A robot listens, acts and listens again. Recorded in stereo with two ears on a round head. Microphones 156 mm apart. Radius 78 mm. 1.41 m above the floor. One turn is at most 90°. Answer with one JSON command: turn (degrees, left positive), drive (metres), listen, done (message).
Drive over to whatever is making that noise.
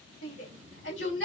{"turn": 75}
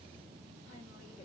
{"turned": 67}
{"listen": true}
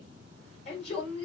{"turn": 35}
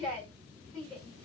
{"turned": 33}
{"drive": 1.0}
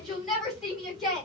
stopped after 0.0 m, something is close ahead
{"done": "Blocked. The shout is further on, straight ahead."}